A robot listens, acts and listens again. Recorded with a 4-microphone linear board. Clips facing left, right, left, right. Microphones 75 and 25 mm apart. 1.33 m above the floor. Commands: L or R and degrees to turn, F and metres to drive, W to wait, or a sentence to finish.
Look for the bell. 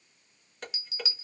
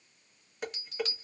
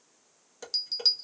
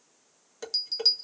L30
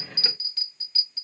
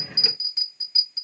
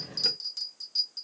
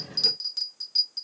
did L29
R25
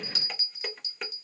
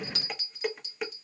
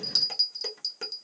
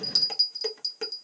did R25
Facing the bell.